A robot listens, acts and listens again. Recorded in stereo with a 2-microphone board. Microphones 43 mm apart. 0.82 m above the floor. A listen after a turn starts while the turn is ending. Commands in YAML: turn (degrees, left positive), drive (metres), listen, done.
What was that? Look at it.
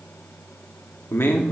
turn: 65
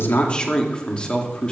turn: 25
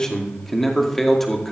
done: "Found it: a man speaking, straight ahead."